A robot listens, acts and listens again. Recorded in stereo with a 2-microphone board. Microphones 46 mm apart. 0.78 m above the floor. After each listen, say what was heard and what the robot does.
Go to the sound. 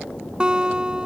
The guitar: about 20° right or 160° right. Turn 20° right.
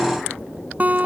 So it is at 140° right. Turn 140° right.
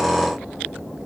Keep listening.
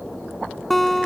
Drive 1.0 m forward.
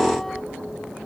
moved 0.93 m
Keep listening.
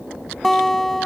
Drive 1.0 m forward.
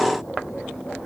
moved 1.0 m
Keep listening.
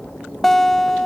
The guitar is now 10° left. Turn 10° left.
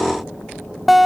Drive 1.0 m forward.
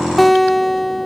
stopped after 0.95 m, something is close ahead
I am next to the guitar.